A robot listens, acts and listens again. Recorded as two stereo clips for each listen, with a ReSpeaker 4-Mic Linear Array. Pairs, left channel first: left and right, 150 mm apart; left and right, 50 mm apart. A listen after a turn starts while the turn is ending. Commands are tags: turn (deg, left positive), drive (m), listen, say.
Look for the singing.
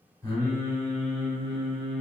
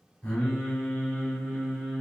<turn deg="30"/>
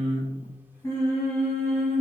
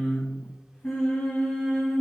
<turn deg="30"/>
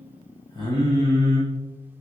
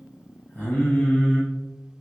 <turn deg="160"/>
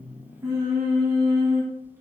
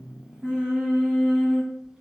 <turn deg="-15"/>
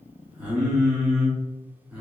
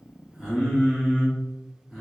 <say>Found it: singing, straight ahead, 1 to 2 m away.</say>